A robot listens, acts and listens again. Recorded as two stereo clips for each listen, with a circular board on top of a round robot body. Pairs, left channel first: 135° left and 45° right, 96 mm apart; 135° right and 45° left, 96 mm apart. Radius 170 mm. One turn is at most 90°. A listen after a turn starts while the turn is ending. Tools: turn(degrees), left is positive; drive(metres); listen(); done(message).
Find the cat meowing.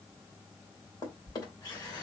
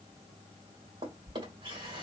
listen()
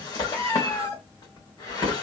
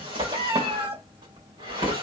turn(degrees=75)
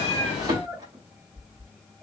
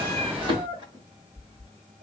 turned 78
turn(degrees=50)
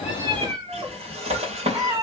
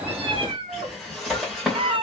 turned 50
turn(degrees=10)
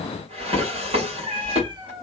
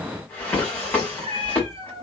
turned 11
done("Found it: a cat meowing, straight ahead, 1 to 2 m away.")